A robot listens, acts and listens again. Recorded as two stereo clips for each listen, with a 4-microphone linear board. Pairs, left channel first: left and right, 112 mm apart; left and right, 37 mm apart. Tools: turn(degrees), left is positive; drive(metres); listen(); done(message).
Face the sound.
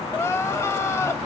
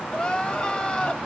turn(degrees=25)
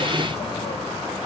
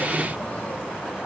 listen()
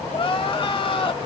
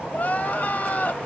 turn(degrees=130)
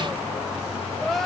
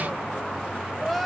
done("Facing the crying, under 1 m away.")